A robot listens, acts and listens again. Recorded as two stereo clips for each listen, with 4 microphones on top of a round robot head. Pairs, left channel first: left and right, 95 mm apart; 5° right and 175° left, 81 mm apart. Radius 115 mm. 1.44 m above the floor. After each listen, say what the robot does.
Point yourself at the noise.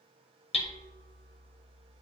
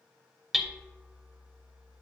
Turn 90° left.
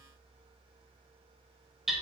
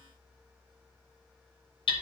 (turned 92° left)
Found it: hammering, straight ahead, 1 to 2 m away.